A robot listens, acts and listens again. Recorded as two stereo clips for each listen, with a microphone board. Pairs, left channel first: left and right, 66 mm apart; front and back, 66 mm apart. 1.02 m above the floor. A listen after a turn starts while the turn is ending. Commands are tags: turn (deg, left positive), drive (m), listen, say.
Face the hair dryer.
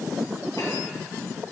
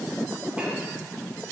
<listen/>
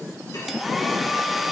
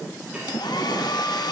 <say>Facing the hair dryer, 1 to 2 m away.</say>